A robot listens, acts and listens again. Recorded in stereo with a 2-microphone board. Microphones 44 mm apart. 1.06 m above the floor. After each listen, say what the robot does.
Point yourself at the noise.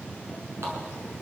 Turn 65° right.
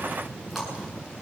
Facing the running tap.